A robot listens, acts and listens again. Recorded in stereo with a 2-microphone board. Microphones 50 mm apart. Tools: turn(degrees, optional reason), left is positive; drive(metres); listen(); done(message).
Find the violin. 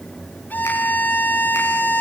turn(degrees=35, reason="The violin: about 35° left or 145° left.")
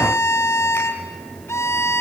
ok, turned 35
turn(degrees=105, reason="So it is at 105° left.")
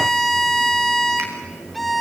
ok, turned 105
done("Facing the violin.")